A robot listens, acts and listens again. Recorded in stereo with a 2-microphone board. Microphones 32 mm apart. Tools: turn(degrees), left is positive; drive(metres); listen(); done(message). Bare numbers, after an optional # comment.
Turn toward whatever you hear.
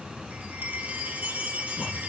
# The chime: about 55° right or 125° right.
turn(-55)
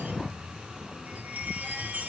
# So it is at 65° right.
turn(-65)
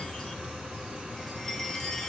# The chime is now 15° left.
turn(15)
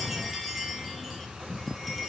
done("Found it: a chime, straight ahead, 2 to 4 m away.")